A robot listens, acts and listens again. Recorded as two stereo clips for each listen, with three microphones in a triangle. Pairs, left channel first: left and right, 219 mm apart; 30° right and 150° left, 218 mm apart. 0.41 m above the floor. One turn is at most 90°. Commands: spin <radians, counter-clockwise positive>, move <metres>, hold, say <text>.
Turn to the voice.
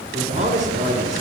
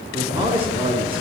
spin -1.57
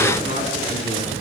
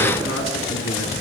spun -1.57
spin -0.52
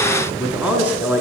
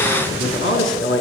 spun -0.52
say Facing the man speaking.